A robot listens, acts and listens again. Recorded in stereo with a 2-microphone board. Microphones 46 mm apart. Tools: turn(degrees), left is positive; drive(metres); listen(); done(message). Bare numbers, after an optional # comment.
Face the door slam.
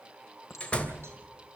# The door slam: about 25° left or 155° left.
turn(25)
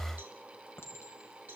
listen()
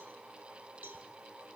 done("I heard a door slam, but can't make it out now. It was about straight ahead or 130° left.")